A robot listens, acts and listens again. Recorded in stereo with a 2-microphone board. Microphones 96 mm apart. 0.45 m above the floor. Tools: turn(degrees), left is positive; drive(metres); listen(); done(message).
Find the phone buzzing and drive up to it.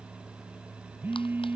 turn(degrees=-20)
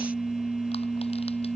drive(metres=1.0)
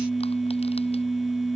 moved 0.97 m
drive(metres=1.0)
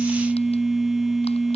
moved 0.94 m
drive(metres=1.0)
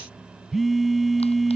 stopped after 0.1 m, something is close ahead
done("Arrived at the phone buzzing, straight ahead.")